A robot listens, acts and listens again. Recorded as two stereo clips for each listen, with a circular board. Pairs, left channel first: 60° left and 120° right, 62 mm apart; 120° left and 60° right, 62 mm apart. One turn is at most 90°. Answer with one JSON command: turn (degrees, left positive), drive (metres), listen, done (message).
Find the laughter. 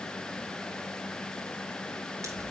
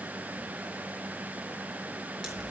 {"listen": true}
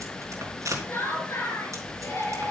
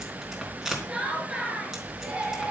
{"turn": 15}
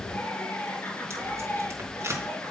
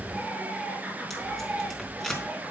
{"done": "Facing the laughter."}